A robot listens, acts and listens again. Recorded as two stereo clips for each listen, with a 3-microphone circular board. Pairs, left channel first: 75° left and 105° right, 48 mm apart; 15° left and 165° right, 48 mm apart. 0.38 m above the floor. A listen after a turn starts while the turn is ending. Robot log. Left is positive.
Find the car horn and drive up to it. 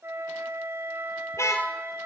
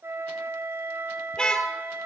note: The car horn: 90° left.
cmd yaw +90
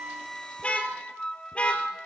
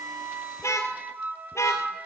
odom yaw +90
note: The car horn is now 10° left.
cmd yaw +10
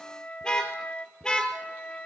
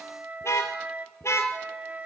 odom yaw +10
cmd fwd 1.0
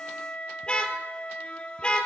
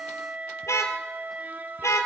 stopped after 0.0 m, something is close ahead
end: Something is in my way. I am facing the car horn but have not reached it.